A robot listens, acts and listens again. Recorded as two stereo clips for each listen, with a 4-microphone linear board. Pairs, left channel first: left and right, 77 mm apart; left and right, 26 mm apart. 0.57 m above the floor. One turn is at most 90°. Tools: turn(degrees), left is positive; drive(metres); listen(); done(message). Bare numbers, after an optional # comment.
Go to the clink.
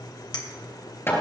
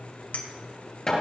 # The clink: about 70° left or 110° left.
turn(70)
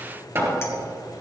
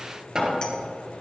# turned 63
listen()
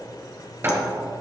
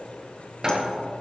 listen()
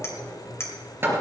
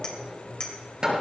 # So it is at 35° left.
turn(35)
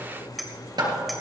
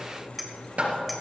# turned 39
drive(1.0)
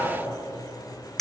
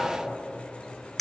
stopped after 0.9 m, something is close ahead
done("Arrived at the clink, straight ahead.")